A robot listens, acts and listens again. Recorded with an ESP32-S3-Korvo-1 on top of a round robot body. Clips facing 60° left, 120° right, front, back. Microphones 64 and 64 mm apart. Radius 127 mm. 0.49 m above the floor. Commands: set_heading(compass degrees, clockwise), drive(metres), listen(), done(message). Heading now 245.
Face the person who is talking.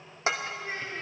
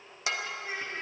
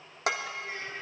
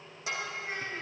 set_heading(85)
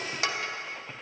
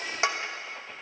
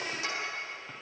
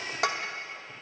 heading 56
set_heading(86)
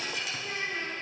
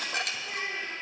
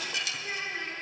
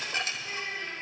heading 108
set_heading(58)
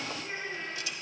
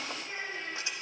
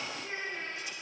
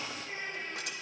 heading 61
done("Facing the child speaking, 2 to 4 m away.")